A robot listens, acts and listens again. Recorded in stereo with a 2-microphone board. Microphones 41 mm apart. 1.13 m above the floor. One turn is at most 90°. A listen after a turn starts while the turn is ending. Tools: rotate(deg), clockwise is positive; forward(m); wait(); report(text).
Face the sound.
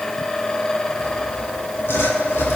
rotate(-90)
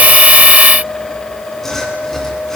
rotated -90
rotate(-10)
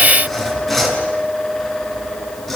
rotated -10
report("Facing the sawing, over 4 m away.")